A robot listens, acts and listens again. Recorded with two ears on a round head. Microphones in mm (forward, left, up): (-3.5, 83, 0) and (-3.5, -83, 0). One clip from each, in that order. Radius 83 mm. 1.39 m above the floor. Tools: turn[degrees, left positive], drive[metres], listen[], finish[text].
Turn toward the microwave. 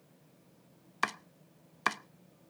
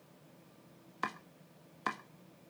Action: listen[]
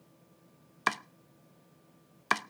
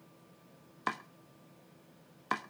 Action: listen[]
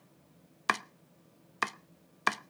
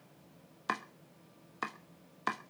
Action: finish[I can't make out a microwave to turn to.]